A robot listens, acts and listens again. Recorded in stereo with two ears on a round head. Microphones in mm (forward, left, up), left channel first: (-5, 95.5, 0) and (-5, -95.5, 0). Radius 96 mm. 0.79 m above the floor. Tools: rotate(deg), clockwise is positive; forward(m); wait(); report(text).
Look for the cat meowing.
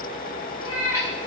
rotate(-90)
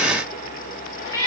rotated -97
rotate(-15)
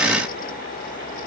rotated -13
wait()
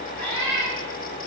rotate(-10)
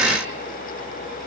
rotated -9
wait()
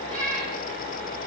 report("Facing the cat meowing, over 4 m away.")